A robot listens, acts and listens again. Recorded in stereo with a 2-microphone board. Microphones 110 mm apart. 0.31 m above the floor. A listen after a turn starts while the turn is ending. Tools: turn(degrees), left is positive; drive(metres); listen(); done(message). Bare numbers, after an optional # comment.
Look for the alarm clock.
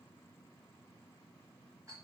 listen()
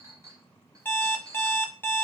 # The alarm clock: about 15° left or 165° left.
turn(15)
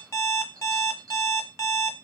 # So it is at 155° left.
turn(155)
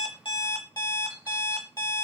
# The alarm clock is now 40° left.
turn(40)
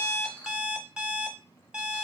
# The alarm clock is now 10° right.
turn(-10)
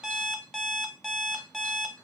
done("Found it: an alarm clock, straight ahead, under 1 m away.")